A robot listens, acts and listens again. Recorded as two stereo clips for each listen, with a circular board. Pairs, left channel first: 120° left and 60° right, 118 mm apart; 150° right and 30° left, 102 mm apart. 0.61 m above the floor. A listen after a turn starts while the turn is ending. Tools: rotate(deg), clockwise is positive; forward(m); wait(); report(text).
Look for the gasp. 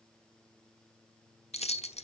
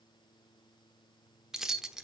wait()
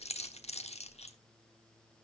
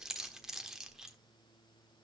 wait()
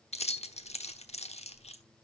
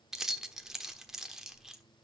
report("I can't make out a gasp, only keys jangling.")